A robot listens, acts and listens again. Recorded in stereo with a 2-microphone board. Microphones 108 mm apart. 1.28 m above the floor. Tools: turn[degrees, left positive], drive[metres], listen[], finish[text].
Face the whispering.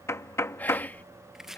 Thought: The whispering: about 15° left or 165° left.
Action: turn[15]
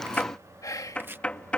Thought: So it is at 150° left.
Action: turn[150]
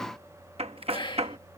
Thought: The whispering is now 50° left.
Action: turn[50]
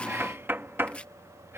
Action: listen[]
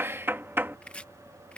Thought: The whispering is now 20° right.
Action: turn[-20]
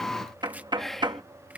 Action: finish[Facing the whispering.]